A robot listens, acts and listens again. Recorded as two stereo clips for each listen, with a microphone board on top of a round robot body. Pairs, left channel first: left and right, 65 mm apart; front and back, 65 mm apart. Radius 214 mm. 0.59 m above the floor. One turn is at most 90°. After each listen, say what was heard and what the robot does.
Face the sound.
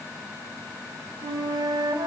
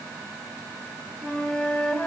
The flute: 75° right. Turn 75° right.
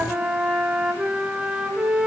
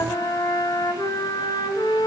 The flute is now 15° right. Turn 15° right.
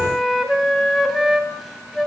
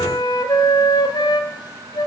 Found it: a flute, straight ahead.